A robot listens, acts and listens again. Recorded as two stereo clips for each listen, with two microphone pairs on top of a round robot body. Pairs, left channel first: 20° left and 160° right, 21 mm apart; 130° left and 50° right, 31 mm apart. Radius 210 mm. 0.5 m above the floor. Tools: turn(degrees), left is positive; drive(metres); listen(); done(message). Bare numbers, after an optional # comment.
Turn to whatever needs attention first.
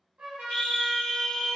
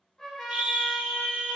# The scream: 25° right.
turn(-25)
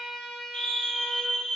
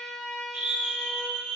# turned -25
# The scream is now 10° right.
turn(-10)
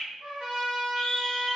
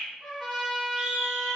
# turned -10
done("Facing the scream.")